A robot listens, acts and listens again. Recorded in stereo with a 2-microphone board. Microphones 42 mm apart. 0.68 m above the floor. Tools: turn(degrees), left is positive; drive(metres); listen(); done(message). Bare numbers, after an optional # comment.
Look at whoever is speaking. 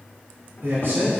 # The man speaking: about 65° right or 115° right.
turn(-65)
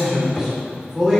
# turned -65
# So it is at 15° right.
turn(-15)
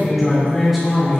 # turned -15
done("Facing the man speaking, 2 to 4 m away.")